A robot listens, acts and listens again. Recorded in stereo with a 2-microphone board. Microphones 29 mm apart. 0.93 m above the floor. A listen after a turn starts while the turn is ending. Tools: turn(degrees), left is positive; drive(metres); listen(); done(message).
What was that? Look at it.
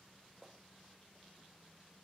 listen()
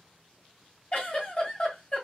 turn(degrees=40)
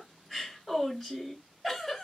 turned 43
done("Facing the giggle.")